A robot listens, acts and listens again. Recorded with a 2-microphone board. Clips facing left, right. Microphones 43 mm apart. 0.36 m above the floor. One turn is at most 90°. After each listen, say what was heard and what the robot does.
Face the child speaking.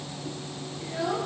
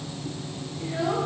Turn 30° right.
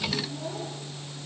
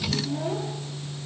Keep listening.
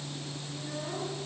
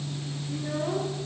Keep listening.
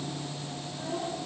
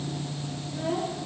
So it is at 125° right. Turn 90° right.
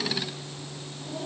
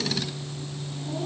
Nothing new. It was at 35° right. Turn 35° right.
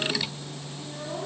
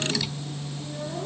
The child speaking is now 15° left. Turn 15° left.
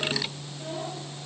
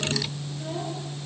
Keep listening.
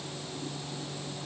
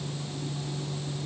Keep listening.
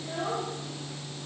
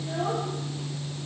Found it: a child speaking, straight ahead, over 4 m away.